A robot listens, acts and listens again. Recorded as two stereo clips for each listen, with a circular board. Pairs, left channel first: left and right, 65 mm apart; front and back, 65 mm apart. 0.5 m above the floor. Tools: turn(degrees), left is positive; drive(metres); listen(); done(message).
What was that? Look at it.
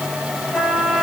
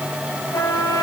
turn(degrees=15)
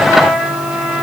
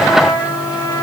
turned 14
done("Facing the trumpet.")